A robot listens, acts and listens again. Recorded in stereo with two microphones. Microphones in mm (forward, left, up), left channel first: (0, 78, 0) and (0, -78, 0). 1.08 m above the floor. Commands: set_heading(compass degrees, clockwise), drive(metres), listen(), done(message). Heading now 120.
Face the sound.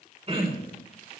set_heading(160)
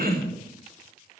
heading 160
set_heading(260)
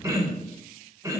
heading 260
set_heading(280)
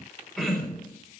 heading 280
done("Found it: throat clearing, straight ahead, over 4 m away.")